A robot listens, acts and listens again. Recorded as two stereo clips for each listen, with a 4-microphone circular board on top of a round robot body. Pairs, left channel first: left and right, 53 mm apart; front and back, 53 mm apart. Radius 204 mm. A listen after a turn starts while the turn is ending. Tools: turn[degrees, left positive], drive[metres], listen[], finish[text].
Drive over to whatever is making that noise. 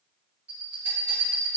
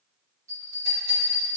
Thought: The bell: 160° right.
Action: turn[-160]
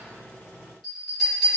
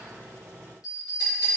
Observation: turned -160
Action: drive[1.0]
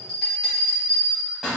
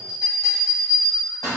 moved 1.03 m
Thought: The bell is now 10° left.
Action: turn[10]
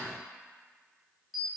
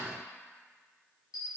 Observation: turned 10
Action: drive[1.0]
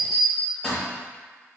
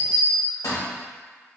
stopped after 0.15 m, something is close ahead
Action: finish[I am next to the bell.]